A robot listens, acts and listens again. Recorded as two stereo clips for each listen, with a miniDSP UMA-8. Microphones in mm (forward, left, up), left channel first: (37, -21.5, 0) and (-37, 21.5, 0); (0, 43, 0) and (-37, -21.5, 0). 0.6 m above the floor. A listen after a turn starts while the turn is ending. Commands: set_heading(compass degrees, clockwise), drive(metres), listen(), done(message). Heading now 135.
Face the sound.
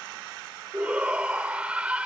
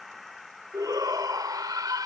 set_heading(270)
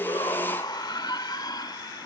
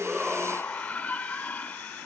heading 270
done("Facing the shout.")